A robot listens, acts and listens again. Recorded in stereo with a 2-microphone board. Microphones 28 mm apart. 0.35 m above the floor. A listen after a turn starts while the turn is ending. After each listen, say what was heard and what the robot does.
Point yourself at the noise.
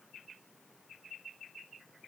Keep listening.
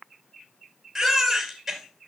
Turn 30° left.
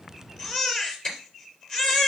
So it is at 150° left. Turn 150° left.
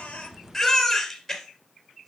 Found it: a baby crying, straight ahead, 2 to 4 m away.